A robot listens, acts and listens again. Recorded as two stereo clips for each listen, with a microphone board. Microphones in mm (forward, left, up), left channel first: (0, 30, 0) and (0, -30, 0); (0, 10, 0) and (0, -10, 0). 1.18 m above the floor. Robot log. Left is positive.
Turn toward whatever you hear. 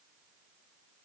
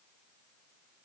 cmd idle
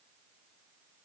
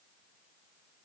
cmd idle
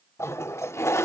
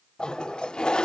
note: The toilet flushing: about 45° left or 135° left.
cmd yaw +45
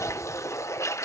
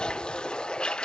note: So it is at 75° left.
cmd yaw +75
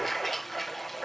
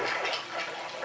end: Facing the toilet flushing.